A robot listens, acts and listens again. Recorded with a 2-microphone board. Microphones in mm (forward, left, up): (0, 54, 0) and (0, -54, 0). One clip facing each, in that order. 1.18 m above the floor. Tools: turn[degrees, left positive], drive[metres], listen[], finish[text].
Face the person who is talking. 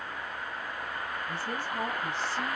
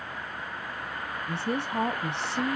Thought: The woman speaking: about 70° right or 110° right.
Action: turn[-70]
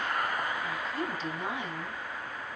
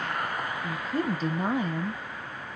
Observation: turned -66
Thought: So it is at 45° right.
Action: turn[-45]
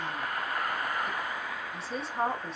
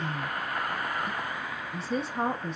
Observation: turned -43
Action: finish[Facing the woman speaking, under 1 m away.]